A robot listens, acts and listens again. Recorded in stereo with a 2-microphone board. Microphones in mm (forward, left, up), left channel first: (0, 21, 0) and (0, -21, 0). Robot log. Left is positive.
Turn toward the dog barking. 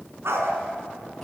cmd yaw -90
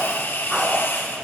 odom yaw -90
note: So it is at 10° right.
cmd yaw -10
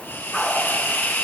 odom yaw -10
end: Facing the dog barking.